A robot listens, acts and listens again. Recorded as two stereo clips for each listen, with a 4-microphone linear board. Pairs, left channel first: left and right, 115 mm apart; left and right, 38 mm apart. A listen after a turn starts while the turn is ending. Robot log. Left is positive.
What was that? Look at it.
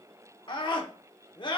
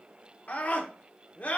note: The scream: about 45° left or 135° left.
cmd yaw +45
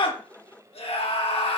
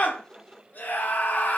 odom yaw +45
note: So it is at 80° left.
cmd yaw +80
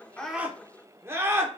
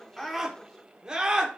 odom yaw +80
note: The scream is now 25° right.
cmd yaw -25
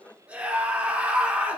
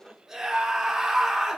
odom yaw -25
note: The scream is now 15° right.
cmd yaw -15
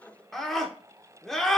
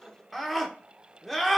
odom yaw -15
end: Facing the scream.